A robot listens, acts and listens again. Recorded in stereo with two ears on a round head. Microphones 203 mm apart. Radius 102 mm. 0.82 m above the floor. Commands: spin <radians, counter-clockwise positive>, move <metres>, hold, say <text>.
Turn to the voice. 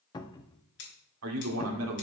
spin -1.31
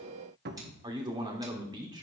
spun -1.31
spin -0.35
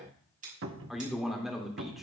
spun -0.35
say Found it: a man speaking, straight ahead, 2 to 4 m away.